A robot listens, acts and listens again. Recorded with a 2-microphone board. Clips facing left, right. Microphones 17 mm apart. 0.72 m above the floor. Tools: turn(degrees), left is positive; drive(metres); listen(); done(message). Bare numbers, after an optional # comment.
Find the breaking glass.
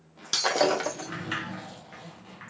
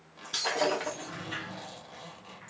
# The breaking glass: about 65° left or 115° left.
turn(65)
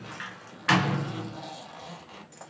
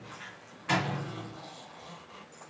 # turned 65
listen()
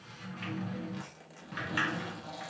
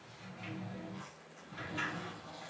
done("I heard breaking glass, but can't make it out now. It was about straight ahead or 50° left.")